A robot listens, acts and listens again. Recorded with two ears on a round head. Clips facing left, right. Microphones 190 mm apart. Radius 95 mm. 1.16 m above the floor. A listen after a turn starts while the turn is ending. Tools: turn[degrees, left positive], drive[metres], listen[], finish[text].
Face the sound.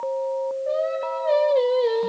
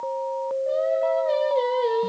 Action: turn[30]
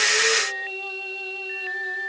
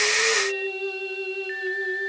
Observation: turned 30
Action: listen[]
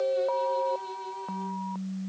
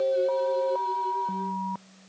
Action: listen[]
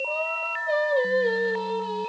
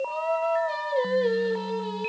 Thought: So it is at 30° right.
Action: turn[-30]
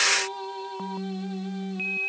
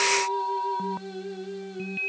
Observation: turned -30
Action: listen[]
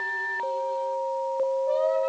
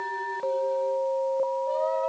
Thought: The singing is now 10° right.
Action: turn[-10]
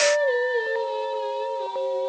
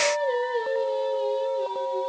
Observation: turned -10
Action: listen[]
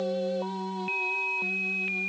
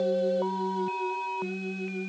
Action: listen[]
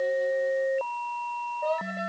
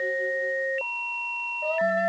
Action: finish[Facing the singing, over 4 m away.]